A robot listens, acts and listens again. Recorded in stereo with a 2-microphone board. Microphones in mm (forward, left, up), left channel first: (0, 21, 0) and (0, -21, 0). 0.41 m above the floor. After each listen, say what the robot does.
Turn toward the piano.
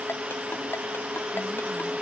Keep listening.
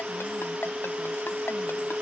Keep listening.
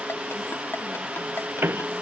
Turn 65° right.
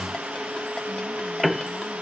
Found it: a piano, straight ahead.